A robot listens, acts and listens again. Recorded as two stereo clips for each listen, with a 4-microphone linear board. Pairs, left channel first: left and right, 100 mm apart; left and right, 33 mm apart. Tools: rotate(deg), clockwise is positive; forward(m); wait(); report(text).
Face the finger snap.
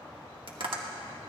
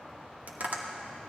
wait()
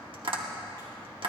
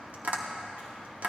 wait()
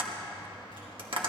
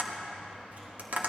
report("I can't make out a finger snap to turn to.")